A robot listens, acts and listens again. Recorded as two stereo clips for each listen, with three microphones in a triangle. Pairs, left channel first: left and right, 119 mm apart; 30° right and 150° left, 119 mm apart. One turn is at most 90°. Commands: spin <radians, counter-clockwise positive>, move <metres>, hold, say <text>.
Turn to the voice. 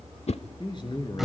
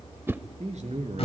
spin 1.57
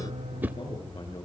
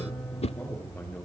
spin 0.79
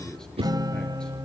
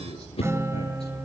say Found it: a man speaking, straight ahead.